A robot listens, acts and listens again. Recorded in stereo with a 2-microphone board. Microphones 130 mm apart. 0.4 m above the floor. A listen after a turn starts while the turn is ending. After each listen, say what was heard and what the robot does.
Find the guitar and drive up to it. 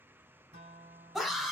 The guitar: about 60° right or 120° right. Turn 60° right.
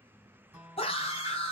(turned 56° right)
So it is at 15° right. Turn 15° right.
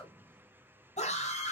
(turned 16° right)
Keep listening.
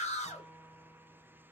Drive 1.0 m forward.
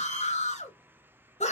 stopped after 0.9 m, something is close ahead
Keep listening.
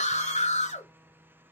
Keep listening.
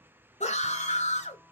I heard a guitar from this way, but can't make it out now. I did not reach it.